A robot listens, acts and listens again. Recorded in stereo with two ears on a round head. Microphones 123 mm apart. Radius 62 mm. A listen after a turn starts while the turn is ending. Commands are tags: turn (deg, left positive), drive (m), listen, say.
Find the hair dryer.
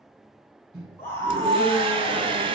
<turn deg="-35"/>
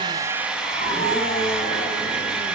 <say>Found it: a hair dryer, straight ahead.</say>